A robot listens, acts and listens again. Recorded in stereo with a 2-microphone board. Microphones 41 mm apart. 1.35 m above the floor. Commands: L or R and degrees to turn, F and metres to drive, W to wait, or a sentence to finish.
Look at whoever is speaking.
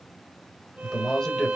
L20
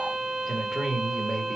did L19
L30
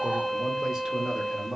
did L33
R10
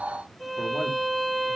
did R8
W
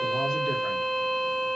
W
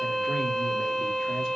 Facing where the man speaking came from. I can't hear it now.